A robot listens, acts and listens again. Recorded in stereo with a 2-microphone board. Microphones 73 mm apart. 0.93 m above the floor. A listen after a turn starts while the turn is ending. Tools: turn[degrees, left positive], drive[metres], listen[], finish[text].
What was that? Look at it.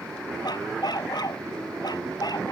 Thought: The dog barking: about 70° left or 110° left.
Action: turn[70]
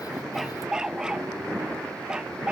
Thought: So it is at 10° right.
Action: turn[-10]
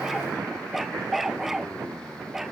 Action: finish[Facing the dog barking.]